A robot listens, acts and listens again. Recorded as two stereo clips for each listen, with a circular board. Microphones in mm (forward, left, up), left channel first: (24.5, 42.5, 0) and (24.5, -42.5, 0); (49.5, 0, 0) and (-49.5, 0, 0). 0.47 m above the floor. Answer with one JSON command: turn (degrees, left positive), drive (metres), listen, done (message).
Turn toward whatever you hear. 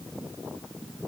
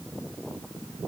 {"listen": true}
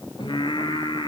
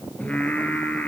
{"turn": 75}
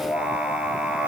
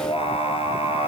{"turn": -10}
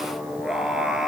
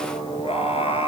{"done": "Facing the singing, 1 to 2 m away."}